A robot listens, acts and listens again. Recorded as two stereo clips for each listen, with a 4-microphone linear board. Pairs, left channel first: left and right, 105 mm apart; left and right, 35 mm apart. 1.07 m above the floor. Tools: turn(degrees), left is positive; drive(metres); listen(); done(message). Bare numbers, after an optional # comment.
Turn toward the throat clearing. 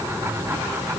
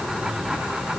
listen()
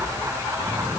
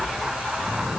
listen()
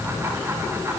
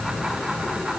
done("I can't make out throat clearing.")